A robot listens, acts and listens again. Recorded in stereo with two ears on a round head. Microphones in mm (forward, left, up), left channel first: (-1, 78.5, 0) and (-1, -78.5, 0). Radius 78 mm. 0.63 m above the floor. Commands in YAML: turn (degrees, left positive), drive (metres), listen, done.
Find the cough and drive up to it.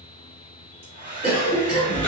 turn: -55
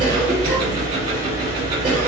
listen: true
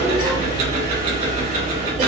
listen: true
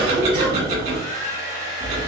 done: "I heard a cough, but can't make it out now. It was about straight ahead or 70° right. I did not reach it."